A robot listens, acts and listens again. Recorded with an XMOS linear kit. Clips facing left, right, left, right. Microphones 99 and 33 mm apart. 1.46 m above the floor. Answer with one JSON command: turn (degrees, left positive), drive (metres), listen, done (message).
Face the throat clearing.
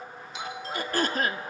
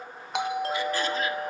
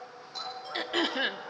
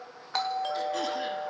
{"turn": 50}
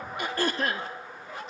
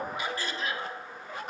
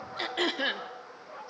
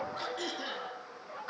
{"turn": 70}
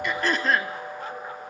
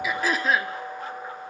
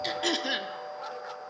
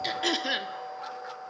{"done": "Facing the throat clearing."}